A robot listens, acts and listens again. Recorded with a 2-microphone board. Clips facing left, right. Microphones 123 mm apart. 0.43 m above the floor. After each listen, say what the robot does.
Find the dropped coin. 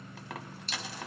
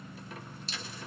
Turn 90° left.
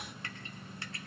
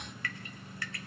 Facing where the dropped coin came from. I can't hear it now.